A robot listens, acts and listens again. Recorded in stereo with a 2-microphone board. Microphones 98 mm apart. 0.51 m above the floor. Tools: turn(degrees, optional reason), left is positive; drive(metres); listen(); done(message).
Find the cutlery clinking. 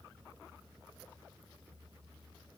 listen()
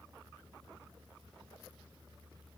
listen()
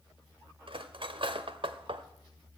turn(degrees=-60, reason="The cutlery clinking: about 60° right or 120° right.")
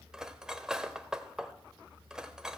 done("Facing the cutlery clinking, under 1 m away.")